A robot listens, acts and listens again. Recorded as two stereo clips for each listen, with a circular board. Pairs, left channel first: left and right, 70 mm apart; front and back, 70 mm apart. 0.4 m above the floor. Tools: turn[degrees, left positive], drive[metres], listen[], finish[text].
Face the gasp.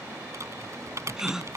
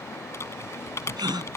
Thought: The gasp: 170° right.
Action: turn[-170]
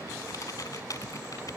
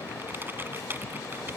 Action: finish[Facing where the gasp came from. I can't hear it now.]